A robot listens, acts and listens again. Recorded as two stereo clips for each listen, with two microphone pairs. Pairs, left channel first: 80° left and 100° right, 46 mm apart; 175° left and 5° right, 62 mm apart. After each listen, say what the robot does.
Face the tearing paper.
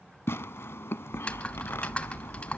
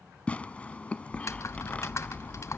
Turn 110° left.
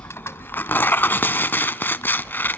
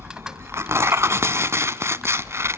Turn 40° left.
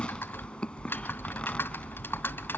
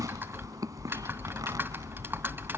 Turn 15° left.
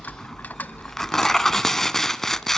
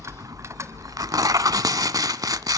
Found it: tearing paper, straight ahead, under 1 m away.